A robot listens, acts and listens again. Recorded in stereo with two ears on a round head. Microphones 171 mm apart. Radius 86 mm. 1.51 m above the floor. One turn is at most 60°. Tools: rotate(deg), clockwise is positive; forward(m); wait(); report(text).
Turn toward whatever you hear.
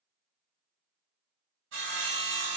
rotate(60)
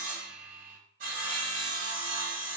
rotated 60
rotate(45)
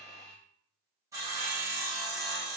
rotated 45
rotate(15)
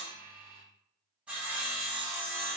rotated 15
report("Found it: sawing, straight ahead, 1 to 2 m away.")